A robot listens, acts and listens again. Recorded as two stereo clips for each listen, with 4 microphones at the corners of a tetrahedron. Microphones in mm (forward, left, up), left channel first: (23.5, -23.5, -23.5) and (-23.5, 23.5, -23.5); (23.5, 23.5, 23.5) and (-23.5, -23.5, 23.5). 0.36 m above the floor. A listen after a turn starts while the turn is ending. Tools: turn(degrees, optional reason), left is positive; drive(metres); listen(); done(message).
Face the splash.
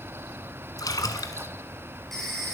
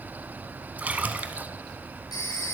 turn(degrees=-70, reason="The splash: 70° right.")
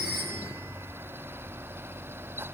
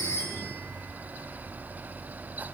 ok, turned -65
done("I heard a splash from this way, but can't make it out now.")